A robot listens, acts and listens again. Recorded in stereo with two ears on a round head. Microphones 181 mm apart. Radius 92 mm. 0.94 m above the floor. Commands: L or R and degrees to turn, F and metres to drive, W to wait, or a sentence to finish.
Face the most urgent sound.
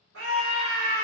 R65
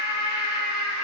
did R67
R30
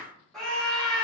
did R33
Found it: a scream, straight ahead.